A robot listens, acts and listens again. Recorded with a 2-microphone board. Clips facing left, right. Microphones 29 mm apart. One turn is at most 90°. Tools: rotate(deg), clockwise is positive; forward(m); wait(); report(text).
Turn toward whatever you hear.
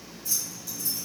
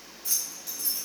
rotate(90)
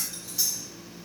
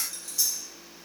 rotate(-15)
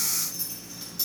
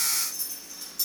rotate(-20)
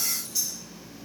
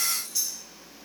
report("Facing the keys jangling, 1 to 2 m away.")